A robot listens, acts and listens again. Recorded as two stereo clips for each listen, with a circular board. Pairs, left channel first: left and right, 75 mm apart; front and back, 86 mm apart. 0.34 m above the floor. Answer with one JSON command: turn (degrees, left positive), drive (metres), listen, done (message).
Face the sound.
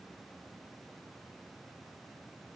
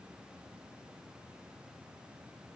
{"listen": true}
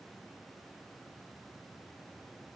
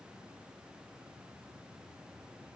{"listen": true}
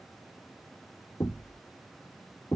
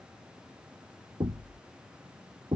{"turn": 145}
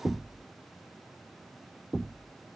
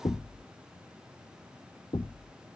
{"done": "Facing the knocking."}